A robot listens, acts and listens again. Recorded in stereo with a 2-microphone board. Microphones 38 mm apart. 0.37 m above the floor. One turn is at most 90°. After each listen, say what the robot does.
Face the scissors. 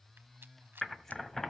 Turn 30° left.
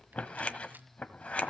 Turn 90° left.
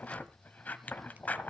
Turn 50° left.
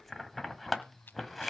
Facing the scissors, 1 to 2 m away.